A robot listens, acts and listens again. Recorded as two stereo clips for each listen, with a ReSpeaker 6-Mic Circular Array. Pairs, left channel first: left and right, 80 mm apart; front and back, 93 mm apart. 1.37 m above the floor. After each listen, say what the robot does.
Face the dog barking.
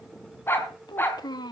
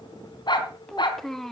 Turn 30° left.
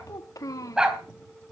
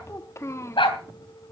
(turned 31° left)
Turn 10° right.
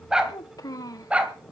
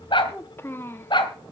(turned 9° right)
Turn 15° right.
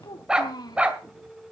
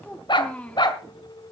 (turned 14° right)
Turn 20° right.
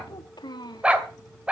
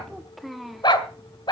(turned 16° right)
Turn 15° right.
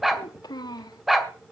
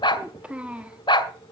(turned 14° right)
Facing the dog barking, 1 to 2 m away.